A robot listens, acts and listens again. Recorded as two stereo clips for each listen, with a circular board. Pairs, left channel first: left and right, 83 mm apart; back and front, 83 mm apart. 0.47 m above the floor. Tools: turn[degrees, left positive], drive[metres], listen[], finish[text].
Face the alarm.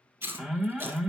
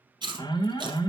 Thought: The alarm: 170° right.
Action: turn[-170]
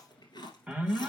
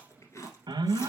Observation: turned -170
Thought: The alarm is now 20° right.
Action: turn[-20]
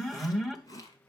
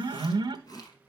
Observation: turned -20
Action: finish[Found it: an alarm, straight ahead.]